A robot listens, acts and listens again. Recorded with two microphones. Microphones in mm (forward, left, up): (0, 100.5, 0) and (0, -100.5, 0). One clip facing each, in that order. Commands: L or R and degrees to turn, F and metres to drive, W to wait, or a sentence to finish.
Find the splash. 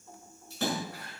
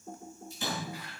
L70
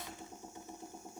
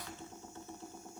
W
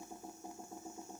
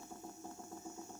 I heard a splash, but can't make it out now. It was about straight ahead or 40° left.